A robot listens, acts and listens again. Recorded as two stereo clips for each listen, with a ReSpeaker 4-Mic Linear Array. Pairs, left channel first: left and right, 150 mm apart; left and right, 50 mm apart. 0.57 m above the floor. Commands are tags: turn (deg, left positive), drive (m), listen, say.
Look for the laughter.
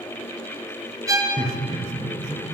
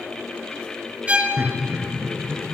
<turn deg="-50"/>
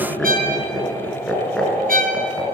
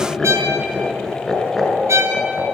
<turn deg="10"/>
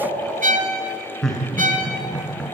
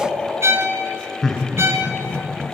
<say>Facing the laughter.</say>